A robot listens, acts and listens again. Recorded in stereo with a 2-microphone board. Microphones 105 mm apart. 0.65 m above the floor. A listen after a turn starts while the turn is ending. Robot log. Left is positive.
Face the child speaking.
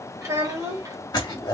note: The child speaking: about 35° right or 145° right.
cmd yaw -35
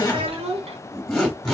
note: So it is at 100° right.
cmd yaw -100
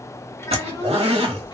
cmd idle
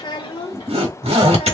note: The child speaking is now 55° left.
cmd yaw +55
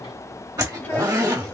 cmd idle
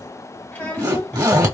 note: The child speaking is now 15° left.
cmd yaw +15
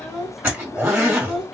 end: Facing the child speaking.